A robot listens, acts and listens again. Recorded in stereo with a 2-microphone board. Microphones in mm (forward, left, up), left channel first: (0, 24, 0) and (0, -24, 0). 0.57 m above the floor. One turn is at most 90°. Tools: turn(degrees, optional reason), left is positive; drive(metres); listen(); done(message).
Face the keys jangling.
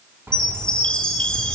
turn(degrees=-70, reason="The keys jangling: about 70° right or 110° right.")
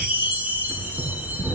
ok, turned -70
done("Found it: keys jangling, straight ahead, over 4 m away.")